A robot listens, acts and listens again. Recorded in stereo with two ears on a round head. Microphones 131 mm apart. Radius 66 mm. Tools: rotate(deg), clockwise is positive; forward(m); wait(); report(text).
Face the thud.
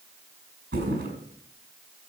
rotate(90)
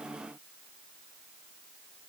report("I heard a thud from this way, but can't make it out now.")